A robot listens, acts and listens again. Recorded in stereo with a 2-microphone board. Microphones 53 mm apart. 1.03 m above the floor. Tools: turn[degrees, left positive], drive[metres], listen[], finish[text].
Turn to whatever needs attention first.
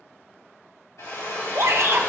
Thought: The shout: about 60° right or 120° right.
Action: turn[-60]
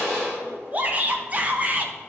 Thought: So it is at 35° right.
Action: turn[-35]
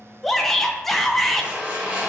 Action: finish[Found it: a shout, straight ahead, under 1 m away.]